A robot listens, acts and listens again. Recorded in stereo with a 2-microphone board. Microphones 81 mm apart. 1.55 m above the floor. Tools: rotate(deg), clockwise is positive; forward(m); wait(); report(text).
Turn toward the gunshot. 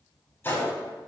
rotate(-25)
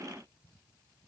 wait()
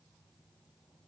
report("I heard a gunshot, but can't make it out now. It was about straight ahead or 130° left.")